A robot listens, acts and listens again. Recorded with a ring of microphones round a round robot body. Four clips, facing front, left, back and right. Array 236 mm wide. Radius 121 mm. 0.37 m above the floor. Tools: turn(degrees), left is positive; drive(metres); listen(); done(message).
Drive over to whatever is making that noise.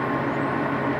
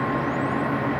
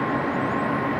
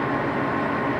listen()
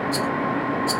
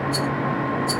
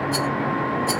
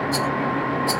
turn(degrees=-110)
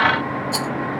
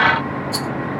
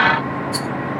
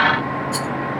turn(degrees=10)
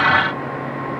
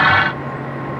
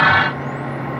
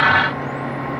listen()
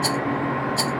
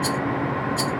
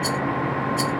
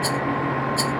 drive(metres=1.0)
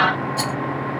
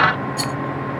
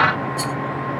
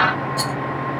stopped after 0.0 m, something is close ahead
turn(degrees=-10)
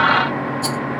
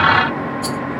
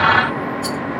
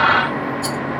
done("Something is in my way. I am facing the rattle but have not reached it.")